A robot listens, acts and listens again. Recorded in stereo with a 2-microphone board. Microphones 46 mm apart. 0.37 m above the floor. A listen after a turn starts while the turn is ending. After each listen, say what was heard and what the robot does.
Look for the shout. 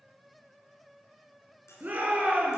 The shout: about 35° right or 145° right. Turn 35° right.
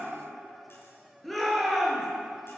Facing the shout, over 4 m away.